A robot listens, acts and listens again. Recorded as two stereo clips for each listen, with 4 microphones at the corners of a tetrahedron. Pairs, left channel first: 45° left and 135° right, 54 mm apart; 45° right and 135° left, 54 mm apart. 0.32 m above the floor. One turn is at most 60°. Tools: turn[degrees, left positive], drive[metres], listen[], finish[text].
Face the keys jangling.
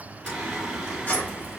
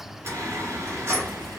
Thought: The keys jangling: 100° left.
Action: turn[60]
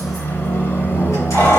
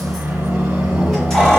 Thought: The keys jangling is now 35° left.
Action: turn[35]
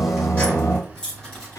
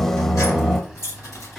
Thought: The keys jangling is now 30° right.
Action: turn[-30]
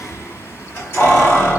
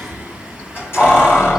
Action: finish[Facing the keys jangling.]